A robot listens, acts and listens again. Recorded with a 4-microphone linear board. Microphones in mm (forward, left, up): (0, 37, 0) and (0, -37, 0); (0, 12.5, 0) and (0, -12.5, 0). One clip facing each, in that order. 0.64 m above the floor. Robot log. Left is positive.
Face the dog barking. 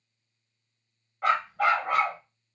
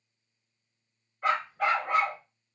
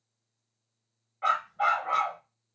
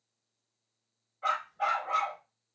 note: The dog barking: about 65° left or 115° left.
cmd yaw +65
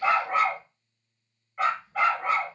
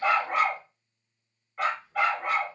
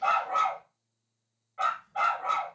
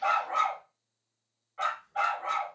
end: Facing the dog barking.